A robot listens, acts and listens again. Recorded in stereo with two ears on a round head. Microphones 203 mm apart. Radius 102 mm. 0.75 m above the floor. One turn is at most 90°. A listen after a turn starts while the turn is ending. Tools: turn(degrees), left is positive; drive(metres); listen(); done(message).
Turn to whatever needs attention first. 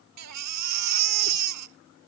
turn(degrees=-90)
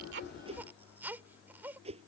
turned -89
turn(degrees=-10)
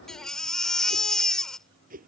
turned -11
done("Found it: a baby crying, straight ahead.")